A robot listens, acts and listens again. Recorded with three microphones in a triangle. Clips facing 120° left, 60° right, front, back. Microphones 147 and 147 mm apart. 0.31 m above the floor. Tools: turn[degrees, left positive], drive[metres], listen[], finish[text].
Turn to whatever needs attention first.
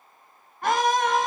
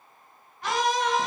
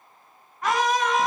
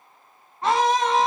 Thought: The scream: 125° left.
Action: turn[125]
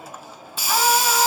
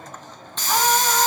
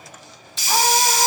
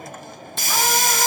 Action: listen[]
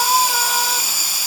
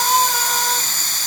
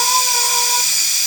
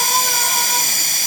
Action: listen[]
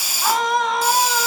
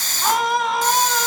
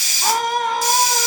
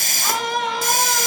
Thought: The scream is now 25° left.
Action: turn[25]
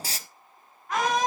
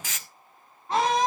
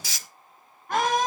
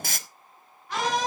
Action: finish[Facing the scream, 2 to 4 m away.]